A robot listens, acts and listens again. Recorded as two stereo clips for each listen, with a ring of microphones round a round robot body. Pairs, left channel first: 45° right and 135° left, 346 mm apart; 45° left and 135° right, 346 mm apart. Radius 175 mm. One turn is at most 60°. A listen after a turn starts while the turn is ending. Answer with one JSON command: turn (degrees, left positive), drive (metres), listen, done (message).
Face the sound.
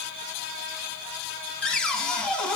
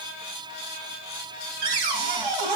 {"turn": -60}
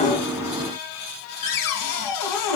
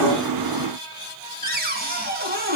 {"turn": -60}
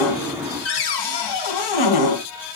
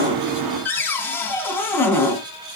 {"turn": -40}
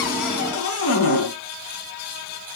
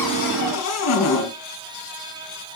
{"done": "Found it: a cupboard door, straight ahead, 2 to 4 m away."}